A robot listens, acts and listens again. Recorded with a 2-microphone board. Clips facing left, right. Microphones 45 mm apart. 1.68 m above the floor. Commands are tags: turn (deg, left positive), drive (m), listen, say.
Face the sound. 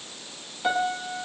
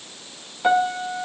<turn deg="-20"/>
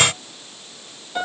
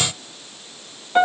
<turn deg="-135"/>
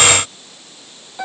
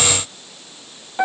<turn deg="-40"/>
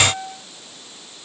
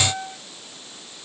<turn deg="-10"/>
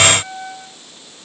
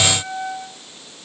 <say>Facing the piano, 2 to 4 m away.</say>